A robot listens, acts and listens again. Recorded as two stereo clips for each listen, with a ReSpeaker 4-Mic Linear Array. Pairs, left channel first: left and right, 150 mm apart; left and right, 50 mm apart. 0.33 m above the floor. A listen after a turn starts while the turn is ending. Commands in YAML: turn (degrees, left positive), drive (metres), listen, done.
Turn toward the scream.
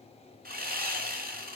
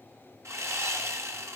listen: true
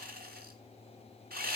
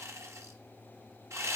listen: true
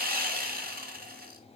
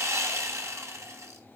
done: "I can't make out a scream to turn to."